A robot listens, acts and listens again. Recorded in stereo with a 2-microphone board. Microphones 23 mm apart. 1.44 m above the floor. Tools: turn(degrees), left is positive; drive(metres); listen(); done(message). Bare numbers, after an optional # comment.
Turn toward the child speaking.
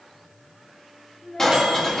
# The child speaking: about 25° left or 155° left.
turn(25)
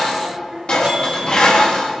# So it is at 15° right.
turn(-15)
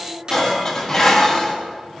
# The child speaking is now 15° right.
turn(-15)
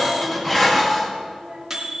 # The child speaking is now 10° right.
turn(-10)
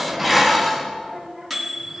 done("Found it: a child speaking, straight ahead, 2 to 4 m away.")